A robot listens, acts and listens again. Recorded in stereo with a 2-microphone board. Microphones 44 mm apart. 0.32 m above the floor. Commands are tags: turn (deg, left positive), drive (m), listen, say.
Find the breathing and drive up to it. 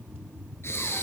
<turn deg="70"/>
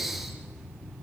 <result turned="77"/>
<drive m="1.0"/>
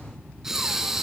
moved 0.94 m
<turn deg="-10"/>
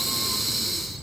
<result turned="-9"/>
<drive m="1.0"/>
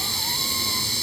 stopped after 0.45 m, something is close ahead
<say>Arrived at the breathing, straight ahead.</say>